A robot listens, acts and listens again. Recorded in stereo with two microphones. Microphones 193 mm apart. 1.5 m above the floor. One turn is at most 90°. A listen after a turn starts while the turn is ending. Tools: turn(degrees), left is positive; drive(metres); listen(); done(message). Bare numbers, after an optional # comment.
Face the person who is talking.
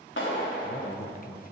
# The man speaking: about 45° left or 135° left.
turn(45)
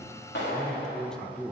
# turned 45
done("Facing the man speaking.")